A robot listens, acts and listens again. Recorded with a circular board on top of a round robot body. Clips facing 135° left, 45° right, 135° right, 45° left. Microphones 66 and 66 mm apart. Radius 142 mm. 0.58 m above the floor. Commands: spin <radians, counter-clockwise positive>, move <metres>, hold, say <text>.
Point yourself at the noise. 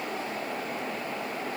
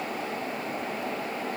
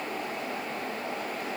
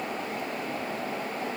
hold
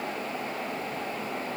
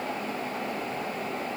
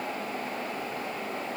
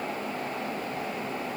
hold
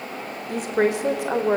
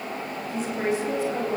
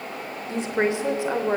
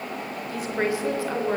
spin 2.62
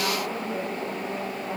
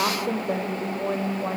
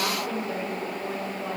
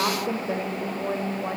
spin -0.44
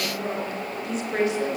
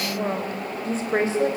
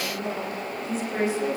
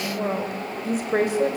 spin 0.17
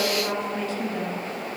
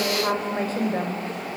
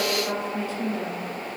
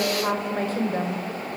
say Found it: a woman speaking, straight ahead.